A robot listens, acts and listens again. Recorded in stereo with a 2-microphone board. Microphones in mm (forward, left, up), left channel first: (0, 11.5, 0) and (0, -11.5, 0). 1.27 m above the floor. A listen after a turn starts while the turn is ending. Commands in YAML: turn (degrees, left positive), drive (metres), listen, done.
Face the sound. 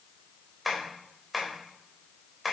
turn: 30
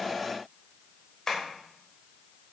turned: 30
turn: 150
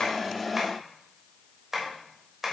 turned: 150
turn: -15
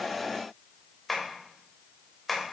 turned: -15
done: "Found it: tapping, straight ahead."